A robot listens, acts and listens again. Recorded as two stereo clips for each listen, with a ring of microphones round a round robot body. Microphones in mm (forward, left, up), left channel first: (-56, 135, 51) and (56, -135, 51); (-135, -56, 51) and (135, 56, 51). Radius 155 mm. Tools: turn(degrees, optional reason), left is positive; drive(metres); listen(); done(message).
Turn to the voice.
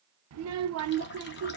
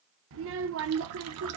turn(degrees=-25, reason="The child speaking: 25° right.")
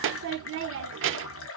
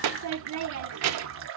turn(degrees=-15, reason="The child speaking is now 15° right.")
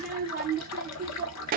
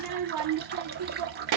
done("Found it: a child speaking, straight ahead.")